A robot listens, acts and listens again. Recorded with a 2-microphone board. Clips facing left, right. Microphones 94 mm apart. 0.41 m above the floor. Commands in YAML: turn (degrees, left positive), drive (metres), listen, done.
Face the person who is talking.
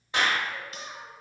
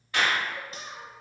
turn: -15
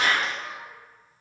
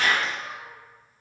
done: "Found it: a child speaking, straight ahead, 1 to 2 m away."